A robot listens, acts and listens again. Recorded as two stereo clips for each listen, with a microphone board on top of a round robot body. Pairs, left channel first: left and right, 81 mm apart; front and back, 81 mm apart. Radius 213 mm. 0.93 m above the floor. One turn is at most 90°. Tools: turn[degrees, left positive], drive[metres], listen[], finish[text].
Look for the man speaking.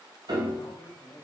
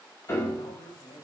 Thought: The man speaking: 35° left.
Action: turn[35]
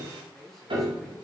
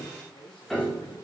Action: finish[Found it: a man speaking, straight ahead, 2 to 4 m away.]